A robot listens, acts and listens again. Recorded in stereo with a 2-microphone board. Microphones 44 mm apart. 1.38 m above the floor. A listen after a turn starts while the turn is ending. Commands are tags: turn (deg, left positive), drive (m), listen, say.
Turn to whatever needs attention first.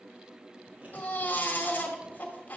<turn deg="40"/>
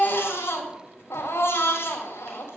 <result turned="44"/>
<turn deg="95"/>
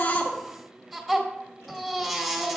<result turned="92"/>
<say>Found it: a baby crying, straight ahead, 2 to 4 m away.</say>